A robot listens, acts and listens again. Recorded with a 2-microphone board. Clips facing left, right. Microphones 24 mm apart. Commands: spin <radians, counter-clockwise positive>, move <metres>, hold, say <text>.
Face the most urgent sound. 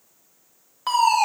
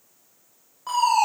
spin 1.57
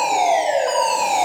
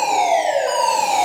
say Found it: a fire alarm, straight ahead, over 4 m away.